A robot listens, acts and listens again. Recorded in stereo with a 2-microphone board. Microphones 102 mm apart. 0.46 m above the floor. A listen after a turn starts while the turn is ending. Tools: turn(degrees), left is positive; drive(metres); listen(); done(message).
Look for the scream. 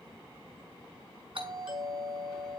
listen()
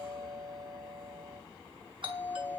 listen()
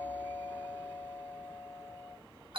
done("I can't make out a scream, only a doorbell.")